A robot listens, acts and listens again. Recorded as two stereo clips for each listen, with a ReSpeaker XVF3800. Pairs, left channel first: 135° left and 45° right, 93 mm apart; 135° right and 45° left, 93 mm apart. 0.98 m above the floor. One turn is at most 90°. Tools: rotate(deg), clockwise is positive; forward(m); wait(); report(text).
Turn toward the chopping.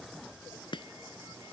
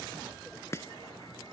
rotate(-90)
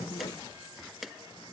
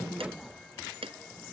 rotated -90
rotate(-45)
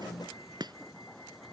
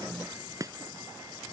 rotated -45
report("Found it: chopping, straight ahead.")